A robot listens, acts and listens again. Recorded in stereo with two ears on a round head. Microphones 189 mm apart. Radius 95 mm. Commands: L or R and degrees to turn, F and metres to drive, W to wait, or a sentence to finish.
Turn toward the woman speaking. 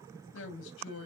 L60
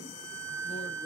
W
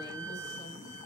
W
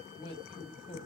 L30
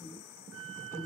L15
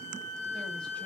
W
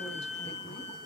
W
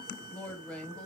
Found it: a woman speaking, straight ahead, under 1 m away.